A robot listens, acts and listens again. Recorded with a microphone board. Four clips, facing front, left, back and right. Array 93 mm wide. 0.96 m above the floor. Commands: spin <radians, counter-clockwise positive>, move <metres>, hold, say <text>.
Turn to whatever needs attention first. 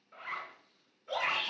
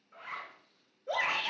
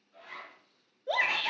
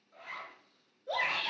spin 3.05
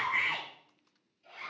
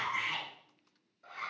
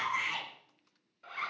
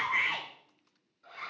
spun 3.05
spin -0.79
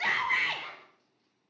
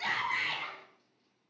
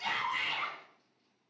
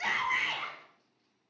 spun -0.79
spin -0.26
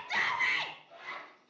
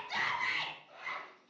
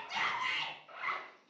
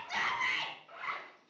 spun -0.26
say Found it: a shout, straight ahead, 2 to 4 m away.